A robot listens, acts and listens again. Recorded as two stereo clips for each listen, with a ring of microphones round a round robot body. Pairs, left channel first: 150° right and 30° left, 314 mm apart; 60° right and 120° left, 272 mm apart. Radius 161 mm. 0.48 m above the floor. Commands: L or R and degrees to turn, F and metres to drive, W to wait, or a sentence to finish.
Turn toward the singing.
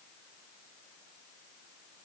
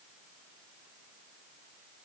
W
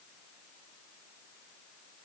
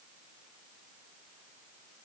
W
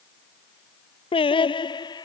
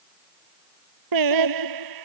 L130
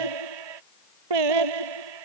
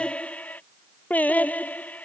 L25
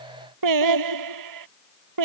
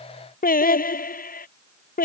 Facing the singing.